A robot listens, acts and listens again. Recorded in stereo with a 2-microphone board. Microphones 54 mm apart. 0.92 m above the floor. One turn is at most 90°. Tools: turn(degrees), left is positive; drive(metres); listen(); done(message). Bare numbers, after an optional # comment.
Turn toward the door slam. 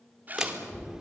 turn(-30)
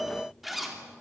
listen()
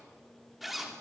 done("I heard a door slam, but can't make it out now. It was about 20° left or 140° right.")